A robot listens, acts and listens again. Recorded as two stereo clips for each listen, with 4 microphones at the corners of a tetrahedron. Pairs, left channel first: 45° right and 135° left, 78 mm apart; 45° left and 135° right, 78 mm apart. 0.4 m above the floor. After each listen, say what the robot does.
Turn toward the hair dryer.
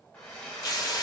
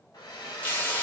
Turn 30° left.
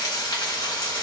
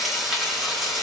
Keep listening.
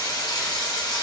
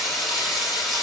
Keep listening.
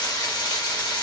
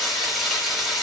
Facing where the hair dryer came from. I can't hear it now.